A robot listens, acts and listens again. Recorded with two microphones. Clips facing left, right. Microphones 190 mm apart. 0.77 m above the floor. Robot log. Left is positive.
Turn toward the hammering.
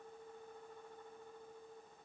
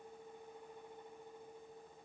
cmd idle
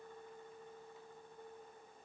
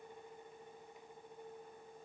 cmd idle
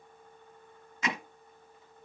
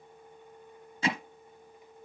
note: The hammering: about 30° right or 150° right.
cmd yaw -30
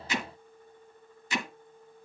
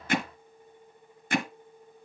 note: So it is at 120° right.
cmd yaw -120
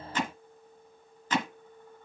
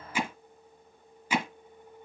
note: The hammering is now 10° right.
cmd yaw -10
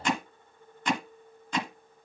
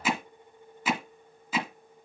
end: Found it: hammering, straight ahead, 1 to 2 m away.